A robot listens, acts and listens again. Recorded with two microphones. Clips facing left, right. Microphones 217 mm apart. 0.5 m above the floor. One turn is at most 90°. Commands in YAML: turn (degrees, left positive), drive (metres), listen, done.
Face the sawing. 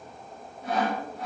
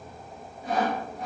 turn: 65
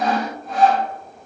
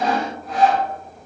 done: "Found it: sawing, straight ahead."